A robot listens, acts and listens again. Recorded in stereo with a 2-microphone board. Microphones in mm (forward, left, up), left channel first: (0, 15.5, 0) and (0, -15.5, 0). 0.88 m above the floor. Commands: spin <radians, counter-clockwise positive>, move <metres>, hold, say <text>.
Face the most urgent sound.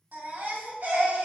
spin -1.57
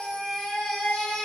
spin 0.17
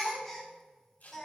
say Found it: a baby crying, straight ahead, 1 to 2 m away.